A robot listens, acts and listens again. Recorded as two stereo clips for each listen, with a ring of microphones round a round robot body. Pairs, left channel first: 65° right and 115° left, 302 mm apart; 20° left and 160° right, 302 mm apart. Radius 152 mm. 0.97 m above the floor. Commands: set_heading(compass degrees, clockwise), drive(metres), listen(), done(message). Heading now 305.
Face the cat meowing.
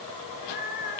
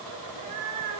set_heading(75)
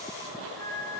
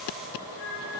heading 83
set_heading(68)
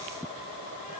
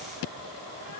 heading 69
listen()
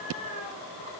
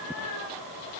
done("Found it: a cat meowing, straight ahead, over 4 m away.")